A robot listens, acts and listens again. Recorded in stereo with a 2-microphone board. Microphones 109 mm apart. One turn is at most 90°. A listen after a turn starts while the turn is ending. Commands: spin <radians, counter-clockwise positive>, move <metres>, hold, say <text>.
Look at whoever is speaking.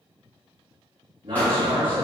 spin -0.87
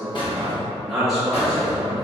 say Facing the man speaking.